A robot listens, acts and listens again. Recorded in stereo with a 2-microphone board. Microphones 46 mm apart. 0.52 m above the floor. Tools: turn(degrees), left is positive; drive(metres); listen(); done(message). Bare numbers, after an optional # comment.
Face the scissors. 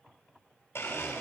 listen()
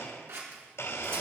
# The scissors: about 65° right or 115° right.
turn(-65)
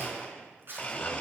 # So it is at 50° right.
turn(-50)
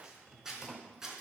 # The scissors is now 10° right.
turn(-10)
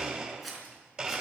done("Facing the scissors.")